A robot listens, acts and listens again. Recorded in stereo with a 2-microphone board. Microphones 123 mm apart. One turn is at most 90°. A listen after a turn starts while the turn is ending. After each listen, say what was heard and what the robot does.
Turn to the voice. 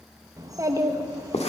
The child speaking: about 30° right or 150° right. Turn 30° right.
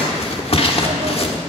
Keep listening.
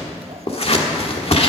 Keep listening.
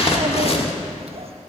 I heard a child speaking, but can't make it out now. It was about straight ahead or 120° right.